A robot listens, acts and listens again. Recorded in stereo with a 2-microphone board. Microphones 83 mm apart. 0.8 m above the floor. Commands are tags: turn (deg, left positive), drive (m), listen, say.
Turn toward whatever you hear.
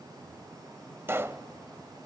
<turn deg="-30"/>
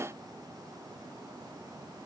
<listen/>
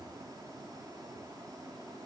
<say>I heard a pop, but can't make it out now. It was about straight ahead or 120° right.</say>